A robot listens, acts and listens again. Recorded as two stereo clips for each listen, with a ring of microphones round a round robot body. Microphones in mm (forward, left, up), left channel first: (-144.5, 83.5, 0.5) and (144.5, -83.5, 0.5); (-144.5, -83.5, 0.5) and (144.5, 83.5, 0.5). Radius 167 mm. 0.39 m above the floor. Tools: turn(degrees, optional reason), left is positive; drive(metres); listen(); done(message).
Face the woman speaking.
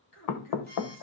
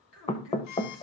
turn(degrees=175, reason="The woman speaking: 175° left.")
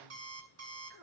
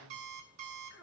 turn(degrees=-15, reason="The woman speaking is now 15° right.")
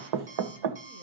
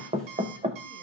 listen()
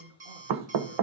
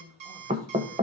done("Facing the woman speaking.")